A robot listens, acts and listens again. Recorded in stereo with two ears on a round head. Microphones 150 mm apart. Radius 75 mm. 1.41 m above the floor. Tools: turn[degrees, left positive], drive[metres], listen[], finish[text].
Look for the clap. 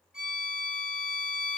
Action: listen[]
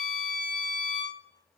Action: listen[]
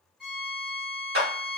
Thought: The clap: about 65° right or 115° right.
Action: turn[-65]
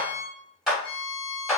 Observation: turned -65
Action: finish[Facing the clap.]